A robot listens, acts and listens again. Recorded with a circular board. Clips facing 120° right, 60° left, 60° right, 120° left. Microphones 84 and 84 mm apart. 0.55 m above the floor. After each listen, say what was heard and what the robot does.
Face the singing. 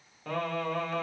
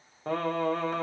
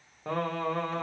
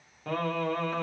Facing the singing.